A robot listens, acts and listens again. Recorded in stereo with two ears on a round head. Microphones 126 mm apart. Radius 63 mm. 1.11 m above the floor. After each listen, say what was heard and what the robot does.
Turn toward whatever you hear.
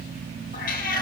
The cat meowing: about 65° left or 115° left. Turn 65° left.
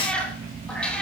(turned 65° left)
So it is at 10° left. Turn 10° left.
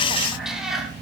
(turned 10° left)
Facing the cat meowing, over 4 m away.